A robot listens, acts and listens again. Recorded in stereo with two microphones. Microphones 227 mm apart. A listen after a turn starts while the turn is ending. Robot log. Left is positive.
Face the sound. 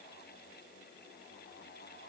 cmd idle
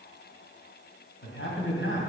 note: The man speaking: about 65° left or 115° left.
cmd yaw +65
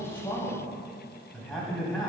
end: Found it: a man speaking, straight ahead.